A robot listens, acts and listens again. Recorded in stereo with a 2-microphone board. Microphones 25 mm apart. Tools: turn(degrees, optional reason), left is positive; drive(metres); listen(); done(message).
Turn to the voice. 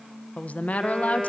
turn(degrees=65, reason="The woman speaking: about 65° left or 115° left.")
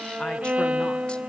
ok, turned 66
listen()
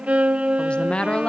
turn(degrees=40, reason="So it is at 40° left.")
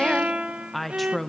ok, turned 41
done("Facing the woman speaking.")